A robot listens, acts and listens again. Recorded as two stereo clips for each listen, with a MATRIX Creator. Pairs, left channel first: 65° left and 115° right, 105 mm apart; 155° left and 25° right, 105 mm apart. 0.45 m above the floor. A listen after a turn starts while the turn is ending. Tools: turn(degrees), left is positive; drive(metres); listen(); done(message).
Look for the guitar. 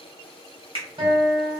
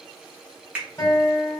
turn(degrees=-145)
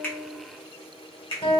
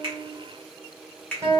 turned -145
turn(degrees=35)
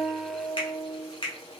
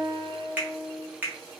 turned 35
done("Facing the guitar.")